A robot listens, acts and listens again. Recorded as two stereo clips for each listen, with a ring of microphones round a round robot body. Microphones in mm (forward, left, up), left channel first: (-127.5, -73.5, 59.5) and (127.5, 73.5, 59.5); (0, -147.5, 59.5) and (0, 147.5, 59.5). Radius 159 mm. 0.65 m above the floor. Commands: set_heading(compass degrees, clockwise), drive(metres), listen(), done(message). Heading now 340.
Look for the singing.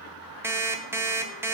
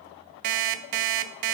listen()
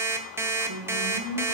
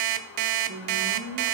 set_heading(305)
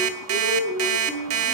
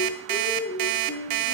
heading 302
set_heading(342)
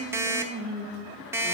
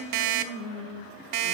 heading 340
set_heading(10)
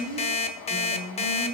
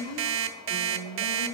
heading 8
set_heading(23)
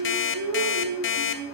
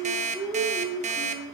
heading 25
done("Found it: singing, straight ahead, 2 to 4 m away.")